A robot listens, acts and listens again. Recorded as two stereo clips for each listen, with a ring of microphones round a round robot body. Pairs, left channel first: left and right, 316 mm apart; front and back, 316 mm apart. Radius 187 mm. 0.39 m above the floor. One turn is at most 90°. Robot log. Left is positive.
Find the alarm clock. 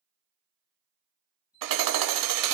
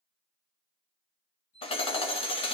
note: The alarm clock: 25° left.
cmd yaw +25
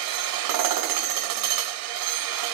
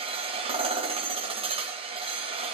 cmd idle
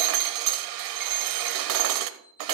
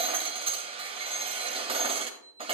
end: Facing the alarm clock, over 4 m away.